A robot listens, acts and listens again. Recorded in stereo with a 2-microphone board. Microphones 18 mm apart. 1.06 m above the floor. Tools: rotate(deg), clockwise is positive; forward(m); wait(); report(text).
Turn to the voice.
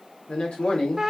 rotate(-90)
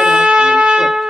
wait()
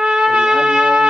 wait()
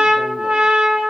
report("Facing where the man speaking came from. I can't hear it now.")